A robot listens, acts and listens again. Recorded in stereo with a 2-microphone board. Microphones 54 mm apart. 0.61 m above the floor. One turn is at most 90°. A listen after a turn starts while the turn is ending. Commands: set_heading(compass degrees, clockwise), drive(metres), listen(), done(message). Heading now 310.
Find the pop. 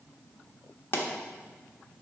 set_heading(265)
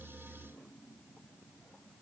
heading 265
listen()
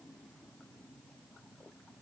done("I heard a pop, but can't make it out now. It was about straight ahead or 90° left.")